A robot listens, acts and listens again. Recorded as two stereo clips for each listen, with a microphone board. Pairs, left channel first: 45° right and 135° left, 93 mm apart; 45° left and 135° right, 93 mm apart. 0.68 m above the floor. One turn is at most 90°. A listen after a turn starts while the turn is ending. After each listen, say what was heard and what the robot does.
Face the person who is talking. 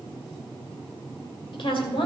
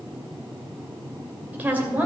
The woman speaking: 60° right. Turn 60° right.
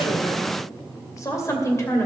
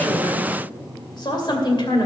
The woman speaking is now 15° left. Turn 15° left.
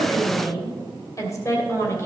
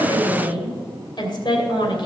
The woman speaking is now 15° left. Turn 15° left.
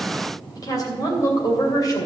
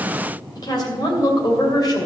Found it: a woman speaking, straight ahead.